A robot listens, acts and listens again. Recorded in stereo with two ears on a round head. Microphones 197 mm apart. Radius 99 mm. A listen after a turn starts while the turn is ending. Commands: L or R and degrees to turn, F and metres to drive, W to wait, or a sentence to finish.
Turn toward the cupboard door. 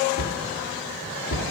L60
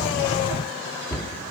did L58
L10
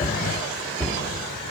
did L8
Facing the cupboard door, 1 to 2 m away.